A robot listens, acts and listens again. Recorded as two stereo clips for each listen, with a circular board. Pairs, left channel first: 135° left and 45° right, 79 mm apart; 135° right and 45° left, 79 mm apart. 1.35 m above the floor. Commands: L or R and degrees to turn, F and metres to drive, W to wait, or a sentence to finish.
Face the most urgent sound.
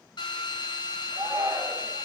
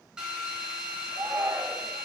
L20
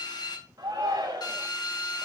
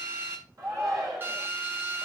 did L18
Facing the shout.